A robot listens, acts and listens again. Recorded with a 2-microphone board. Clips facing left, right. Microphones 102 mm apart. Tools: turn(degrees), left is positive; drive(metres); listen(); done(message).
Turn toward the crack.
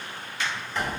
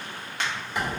turn(degrees=-65)
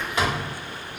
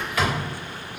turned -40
listen()
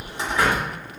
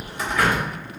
done("I heard a crack, but can't make it out now. It was about 25° right or 75° right.")